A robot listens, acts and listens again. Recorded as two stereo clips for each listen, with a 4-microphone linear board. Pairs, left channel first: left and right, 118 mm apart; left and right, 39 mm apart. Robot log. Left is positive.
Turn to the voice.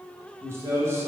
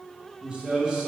note: The man speaking: about 25° right or 155° right.
cmd yaw -25
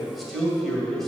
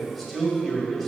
end: Facing the man speaking.